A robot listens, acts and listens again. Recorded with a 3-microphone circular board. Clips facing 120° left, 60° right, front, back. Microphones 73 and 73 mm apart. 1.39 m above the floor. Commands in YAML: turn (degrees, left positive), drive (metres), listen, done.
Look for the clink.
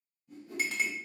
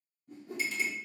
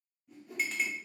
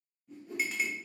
turn: 95
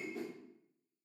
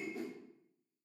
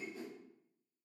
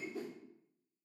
listen: true
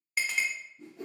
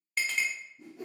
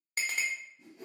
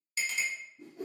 turn: 35
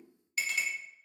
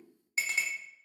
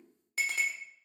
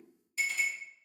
done: "Found it: a clink, straight ahead."